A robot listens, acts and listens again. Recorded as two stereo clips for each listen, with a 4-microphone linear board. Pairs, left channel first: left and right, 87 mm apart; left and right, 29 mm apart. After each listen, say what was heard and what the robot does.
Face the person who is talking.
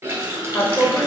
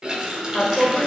The woman speaking: about 25° left or 155° left. Turn 25° left.
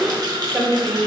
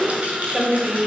Found it: a woman speaking, straight ahead, 1 to 2 m away.